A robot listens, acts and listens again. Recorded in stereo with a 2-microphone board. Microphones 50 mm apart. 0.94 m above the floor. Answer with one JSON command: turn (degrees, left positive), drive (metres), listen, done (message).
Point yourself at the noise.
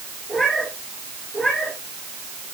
{"turn": 30}
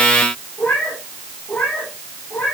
{"turn": 140}
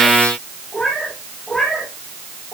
{"done": "Found it: a cat meowing, straight ahead."}